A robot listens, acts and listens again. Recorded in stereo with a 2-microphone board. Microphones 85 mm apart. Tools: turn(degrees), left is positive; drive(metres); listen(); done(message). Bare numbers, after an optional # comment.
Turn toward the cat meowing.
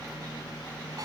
listen()
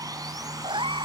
turn(-90)
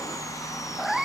done("Found it: a cat meowing, straight ahead.")